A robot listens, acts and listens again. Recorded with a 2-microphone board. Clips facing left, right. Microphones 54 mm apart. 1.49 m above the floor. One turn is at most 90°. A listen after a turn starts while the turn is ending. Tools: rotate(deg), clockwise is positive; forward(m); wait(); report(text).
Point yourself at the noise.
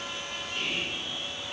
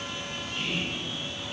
rotate(-75)
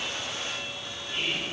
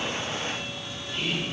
rotate(-35)
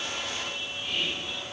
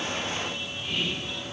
report("Facing the whispering, 1 to 2 m away.")